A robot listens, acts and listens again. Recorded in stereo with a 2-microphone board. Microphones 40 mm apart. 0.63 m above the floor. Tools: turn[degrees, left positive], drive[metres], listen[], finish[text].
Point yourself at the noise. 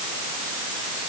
Action: listen[]
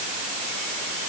Action: listen[]
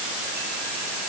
Action: finish[I can't make out anything to turn to.]